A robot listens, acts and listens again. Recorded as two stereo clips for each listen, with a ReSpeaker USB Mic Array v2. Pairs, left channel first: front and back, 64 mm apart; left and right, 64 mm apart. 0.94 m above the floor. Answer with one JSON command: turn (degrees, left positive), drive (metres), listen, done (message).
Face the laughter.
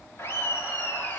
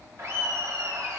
{"turn": -50}
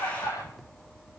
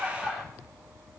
{"done": "Facing the laughter, 2 to 4 m away."}